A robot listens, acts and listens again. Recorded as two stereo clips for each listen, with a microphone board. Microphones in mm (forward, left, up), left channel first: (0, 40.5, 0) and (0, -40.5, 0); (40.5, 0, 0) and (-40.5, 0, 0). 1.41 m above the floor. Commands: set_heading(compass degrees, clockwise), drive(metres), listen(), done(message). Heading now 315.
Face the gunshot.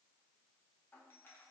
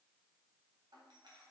listen()
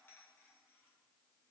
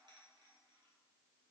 listen()
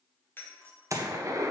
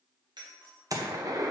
set_heading(95)
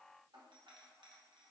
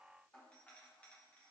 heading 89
done("I heard a gunshot from this way, but can't make it out now.")